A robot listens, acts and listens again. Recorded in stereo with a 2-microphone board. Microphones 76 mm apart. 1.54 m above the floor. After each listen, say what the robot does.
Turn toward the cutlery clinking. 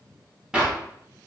Keep listening.
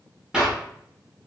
Keep listening.
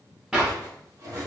Turn 45° right.
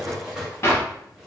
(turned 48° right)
Turn 10° right.
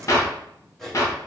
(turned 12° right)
Facing the cutlery clinking, 1 to 2 m away.